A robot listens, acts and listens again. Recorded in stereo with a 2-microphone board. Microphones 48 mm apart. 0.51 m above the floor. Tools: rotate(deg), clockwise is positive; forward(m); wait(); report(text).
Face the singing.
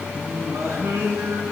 rotate(90)
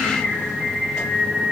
report("Found it: singing, straight ahead.")